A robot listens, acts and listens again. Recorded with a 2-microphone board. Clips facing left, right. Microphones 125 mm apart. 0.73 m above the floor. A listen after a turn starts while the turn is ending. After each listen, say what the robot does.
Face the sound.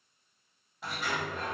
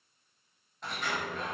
Turn 30° left.
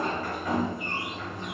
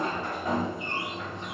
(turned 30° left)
Turn 25° right.
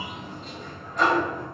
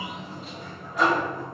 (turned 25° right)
Facing the sliding door, 1 to 2 m away.